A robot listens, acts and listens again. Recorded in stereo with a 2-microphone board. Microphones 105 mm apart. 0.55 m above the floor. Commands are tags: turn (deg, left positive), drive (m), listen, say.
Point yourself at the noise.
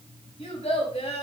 <turn deg="90"/>
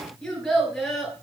<say>Facing the child speaking, over 4 m away.</say>